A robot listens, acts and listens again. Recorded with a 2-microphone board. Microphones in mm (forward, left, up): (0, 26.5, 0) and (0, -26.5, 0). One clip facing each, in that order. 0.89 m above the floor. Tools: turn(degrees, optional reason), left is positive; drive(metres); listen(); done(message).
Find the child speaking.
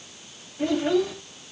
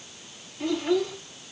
turn(degrees=50, reason="The child speaking: about 50° left or 130° left.")
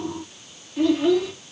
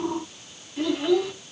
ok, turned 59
done("Found it: a child speaking, straight ahead, over 4 m away.")